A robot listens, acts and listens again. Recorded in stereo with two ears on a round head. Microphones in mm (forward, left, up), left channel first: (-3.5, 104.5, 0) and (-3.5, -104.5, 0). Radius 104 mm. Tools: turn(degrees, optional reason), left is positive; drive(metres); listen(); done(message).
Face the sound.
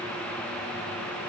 listen()
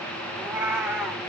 turn(degrees=30)
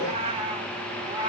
turn(degrees=-20, reason="So it is at 20° right.")
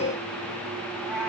done("Facing the cat meowing, 2 to 4 m away.")